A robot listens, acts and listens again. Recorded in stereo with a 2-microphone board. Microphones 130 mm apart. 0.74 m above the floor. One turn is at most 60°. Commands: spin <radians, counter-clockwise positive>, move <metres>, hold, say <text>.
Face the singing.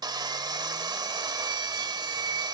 hold
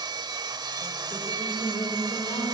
spin 0.61
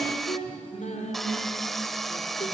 spin 1.05
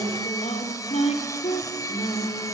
spin 1.05
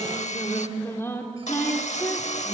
spin 0.35
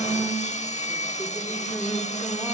say Found it: singing, straight ahead.